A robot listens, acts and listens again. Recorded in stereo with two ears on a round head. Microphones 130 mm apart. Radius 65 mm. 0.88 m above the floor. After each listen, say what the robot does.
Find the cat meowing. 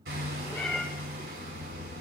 Turn 30° left.
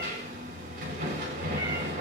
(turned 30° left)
Keep listening.
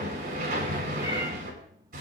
Keep listening.
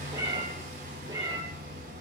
Turn 30° right.
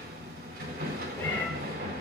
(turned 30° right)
Turn 10° left.
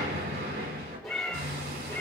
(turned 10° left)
Facing the cat meowing.